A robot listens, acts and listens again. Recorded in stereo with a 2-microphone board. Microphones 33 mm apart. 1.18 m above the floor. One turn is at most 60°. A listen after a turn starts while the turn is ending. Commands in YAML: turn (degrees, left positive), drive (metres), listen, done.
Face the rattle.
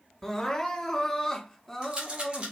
turn: -30
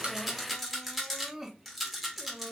done: "Found it: a rattle, straight ahead."